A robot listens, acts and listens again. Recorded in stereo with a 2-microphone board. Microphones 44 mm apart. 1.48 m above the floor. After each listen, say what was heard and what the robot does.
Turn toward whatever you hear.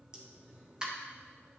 Turn 30° right.
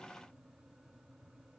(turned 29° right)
Keep listening.
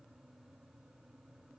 I heard a pop, but can't make it out now. It was about 15° left or 135° right.